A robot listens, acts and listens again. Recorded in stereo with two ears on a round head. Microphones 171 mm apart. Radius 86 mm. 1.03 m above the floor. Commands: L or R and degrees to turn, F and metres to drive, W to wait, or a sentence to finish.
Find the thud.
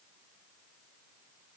W
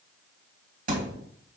R45
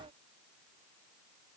W
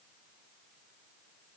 I heard a thud, but can't make it out now. It was about straight ahead or 90° right.